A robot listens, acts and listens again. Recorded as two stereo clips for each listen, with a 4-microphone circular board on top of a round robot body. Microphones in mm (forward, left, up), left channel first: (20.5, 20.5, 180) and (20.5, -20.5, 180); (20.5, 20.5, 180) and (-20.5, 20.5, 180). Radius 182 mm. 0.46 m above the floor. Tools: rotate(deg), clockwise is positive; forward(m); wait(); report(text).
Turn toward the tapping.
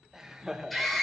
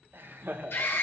wait()
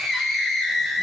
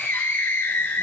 wait()
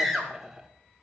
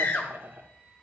report("I can't make out tapping to turn to.")